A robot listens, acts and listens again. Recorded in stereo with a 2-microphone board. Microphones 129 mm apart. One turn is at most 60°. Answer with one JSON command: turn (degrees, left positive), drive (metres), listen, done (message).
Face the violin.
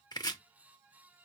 {"listen": true}
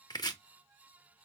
{"listen": true}
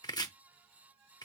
{"done": "I can't make out a violin, only chopping."}